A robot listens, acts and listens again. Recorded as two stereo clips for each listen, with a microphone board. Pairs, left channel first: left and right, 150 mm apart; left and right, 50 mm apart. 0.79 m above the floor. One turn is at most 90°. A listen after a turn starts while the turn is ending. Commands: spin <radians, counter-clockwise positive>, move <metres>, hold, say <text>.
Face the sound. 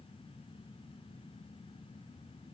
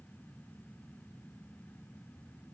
hold
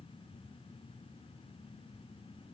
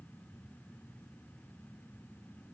hold
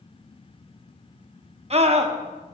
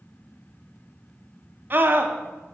spin -0.79
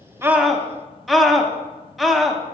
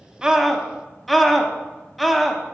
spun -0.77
say Found it: a scream, straight ahead.